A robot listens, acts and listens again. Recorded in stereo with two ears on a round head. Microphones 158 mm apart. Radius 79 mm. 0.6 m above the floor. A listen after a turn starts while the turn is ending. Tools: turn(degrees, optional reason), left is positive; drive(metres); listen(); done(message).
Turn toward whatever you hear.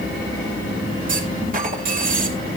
turn(degrees=-50, reason="The clunk: about 50° right or 130° right.")
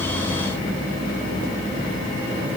listen()
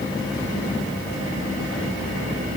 done("I heard a clunk, but can't make it out now. It was about straight ahead or 80° right.")